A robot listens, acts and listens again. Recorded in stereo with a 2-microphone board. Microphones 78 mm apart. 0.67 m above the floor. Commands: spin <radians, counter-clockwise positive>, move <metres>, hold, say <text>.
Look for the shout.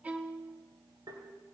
hold
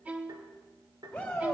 spin 0.35
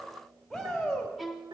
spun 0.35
say Facing the shout, 2 to 4 m away.